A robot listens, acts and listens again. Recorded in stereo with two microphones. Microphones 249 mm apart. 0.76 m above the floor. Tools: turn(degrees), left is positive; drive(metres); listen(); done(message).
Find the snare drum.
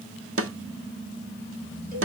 turn(degrees=-65)
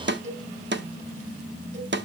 turn(degrees=-50)
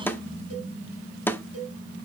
turn(degrees=10)
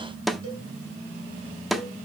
done("Found it: a snare drum, straight ahead.")